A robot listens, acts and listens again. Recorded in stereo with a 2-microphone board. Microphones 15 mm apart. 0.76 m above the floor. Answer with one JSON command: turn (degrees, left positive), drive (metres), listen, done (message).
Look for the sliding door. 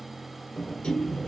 {"turn": 90}
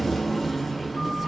{"done": "Facing the sliding door, 1 to 2 m away."}